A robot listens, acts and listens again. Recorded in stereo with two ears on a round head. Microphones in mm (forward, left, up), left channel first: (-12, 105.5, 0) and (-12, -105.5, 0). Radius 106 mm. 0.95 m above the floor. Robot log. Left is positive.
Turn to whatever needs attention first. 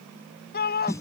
note: The shout: about 45° left or 135° left.
cmd yaw +45
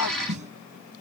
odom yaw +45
cmd idle
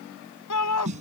note: So it is at 90° left.
cmd yaw +90
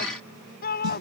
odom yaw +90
note: The shout is now 40° left.
cmd yaw +40
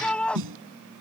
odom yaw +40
end: Found it: a shout, straight ahead.